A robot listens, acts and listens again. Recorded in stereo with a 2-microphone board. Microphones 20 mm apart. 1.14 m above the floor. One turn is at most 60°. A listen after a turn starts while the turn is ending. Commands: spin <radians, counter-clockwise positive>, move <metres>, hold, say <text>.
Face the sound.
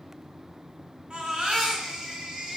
spin -1.05
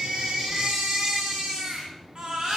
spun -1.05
spin -0.87
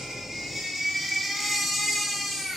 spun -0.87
say Facing the baby crying.